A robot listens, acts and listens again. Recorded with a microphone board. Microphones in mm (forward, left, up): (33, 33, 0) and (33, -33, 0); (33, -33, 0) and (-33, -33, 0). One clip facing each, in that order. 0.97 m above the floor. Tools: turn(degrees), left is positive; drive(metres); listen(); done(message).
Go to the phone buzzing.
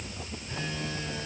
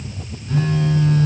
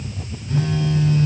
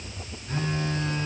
turn(degrees=-125)
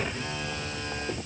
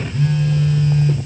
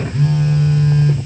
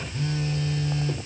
turn(degrees=15)
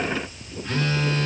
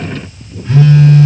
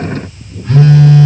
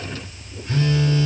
turn(degrees=-10)
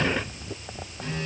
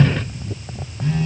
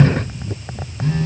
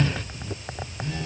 drive(metres=1.0)
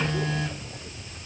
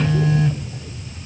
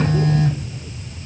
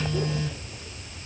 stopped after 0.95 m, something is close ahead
done("I am next to the phone buzzing.")